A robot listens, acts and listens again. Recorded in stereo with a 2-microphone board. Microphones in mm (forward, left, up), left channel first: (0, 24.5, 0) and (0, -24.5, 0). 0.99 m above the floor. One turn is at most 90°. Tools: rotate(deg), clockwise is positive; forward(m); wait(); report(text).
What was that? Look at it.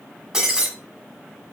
rotate(30)
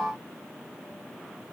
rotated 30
wait()
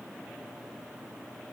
report("I heard breaking glass, but can't make it out now. It was about 20° left or 140° right.")